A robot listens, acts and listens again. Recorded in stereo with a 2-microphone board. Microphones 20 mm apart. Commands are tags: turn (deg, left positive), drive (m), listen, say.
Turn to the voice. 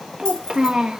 <turn deg="-45"/>
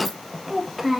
<turn deg="-10"/>
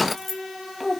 <say>Facing the child speaking, 1 to 2 m away.</say>